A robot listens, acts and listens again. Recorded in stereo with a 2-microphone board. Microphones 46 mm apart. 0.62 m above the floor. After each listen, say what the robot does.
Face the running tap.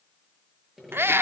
Keep listening.
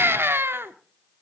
Keep listening.
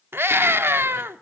I can't make out a running tap to turn to.